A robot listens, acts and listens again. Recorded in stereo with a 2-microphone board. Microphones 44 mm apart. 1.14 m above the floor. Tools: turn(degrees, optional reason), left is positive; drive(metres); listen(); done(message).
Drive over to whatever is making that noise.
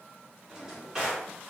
turn(degrees=-30)
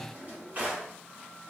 turn(degrees=-140, reason="So it is at 140° right.")
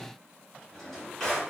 turn(degrees=10, reason="The drawer is now 10° left.")
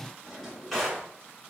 drive(metres=1.0)
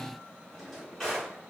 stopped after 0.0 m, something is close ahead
done("Something is in my way. I am facing the drawer but have not reached it.")